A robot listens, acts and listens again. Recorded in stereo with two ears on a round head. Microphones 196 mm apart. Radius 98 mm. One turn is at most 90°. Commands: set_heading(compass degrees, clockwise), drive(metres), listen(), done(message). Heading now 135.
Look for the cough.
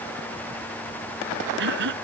set_heading(190)
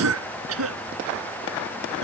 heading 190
set_heading(260)
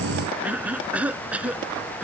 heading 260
done("Facing the cough.")